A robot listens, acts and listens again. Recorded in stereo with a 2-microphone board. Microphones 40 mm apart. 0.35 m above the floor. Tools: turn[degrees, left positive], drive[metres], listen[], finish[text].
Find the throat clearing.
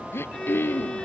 Action: turn[90]
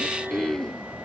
Thought: So it is at 10° left.
Action: turn[10]
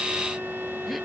Action: listen[]
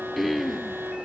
Action: finish[Found it: throat clearing, straight ahead.]